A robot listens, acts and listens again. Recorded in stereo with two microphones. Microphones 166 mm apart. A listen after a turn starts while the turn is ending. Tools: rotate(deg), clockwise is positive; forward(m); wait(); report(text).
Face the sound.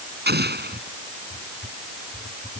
rotate(90)
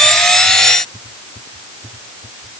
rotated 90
report("I heard an explosion from this way, but can't make it out now.")